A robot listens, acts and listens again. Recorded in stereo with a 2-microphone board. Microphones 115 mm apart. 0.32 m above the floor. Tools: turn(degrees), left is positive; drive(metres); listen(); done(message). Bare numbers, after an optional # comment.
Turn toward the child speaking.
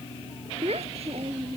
# The child speaking: about 60° right or 120° right.
turn(-60)
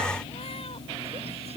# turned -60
# So it is at 65° right.
turn(-65)
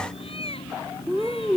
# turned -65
# The child speaking is now 20° right.
turn(-20)
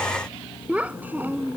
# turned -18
# The child speaking is now 15° right.
turn(-15)
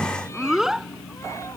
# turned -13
done("Found it: a child speaking, straight ahead.")